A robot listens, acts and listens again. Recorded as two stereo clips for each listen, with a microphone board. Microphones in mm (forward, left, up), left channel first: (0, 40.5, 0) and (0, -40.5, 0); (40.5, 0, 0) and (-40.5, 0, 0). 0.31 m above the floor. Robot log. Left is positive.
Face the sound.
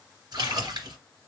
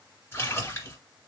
note: The splash: 60° right.
cmd yaw -60
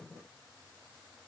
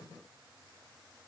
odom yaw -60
end: I heard a splash from this way, but can't make it out now.